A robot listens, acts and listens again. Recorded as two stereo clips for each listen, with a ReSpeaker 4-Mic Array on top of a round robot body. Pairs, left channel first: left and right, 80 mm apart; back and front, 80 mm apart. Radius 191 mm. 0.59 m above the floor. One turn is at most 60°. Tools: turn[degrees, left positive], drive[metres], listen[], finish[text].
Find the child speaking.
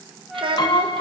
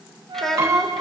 Thought: The child speaking: 95° right.
Action: turn[-60]
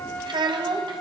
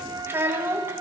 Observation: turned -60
Thought: The child speaking is now 65° right.
Action: turn[-60]
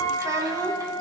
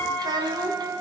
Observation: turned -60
Thought: The child speaking is now 40° right.
Action: turn[-40]
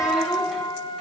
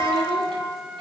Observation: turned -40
Action: listen[]
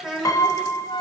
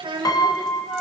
Action: finish[Found it: a child speaking, straight ahead, over 4 m away.]